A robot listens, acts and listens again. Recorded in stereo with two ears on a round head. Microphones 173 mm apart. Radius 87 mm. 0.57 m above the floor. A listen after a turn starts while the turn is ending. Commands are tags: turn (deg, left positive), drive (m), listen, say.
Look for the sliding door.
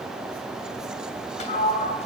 <turn deg="35"/>
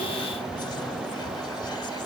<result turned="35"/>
<listen/>
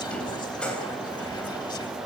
<say>Facing the sliding door, 2 to 4 m away.</say>